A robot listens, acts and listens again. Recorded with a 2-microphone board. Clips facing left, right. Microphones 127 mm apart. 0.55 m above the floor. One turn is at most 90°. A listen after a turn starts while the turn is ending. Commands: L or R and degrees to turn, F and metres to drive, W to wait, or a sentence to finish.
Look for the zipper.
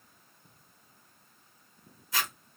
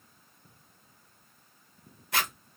R60
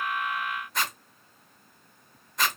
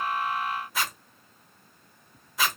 Found it: a zipper, straight ahead, under 1 m away.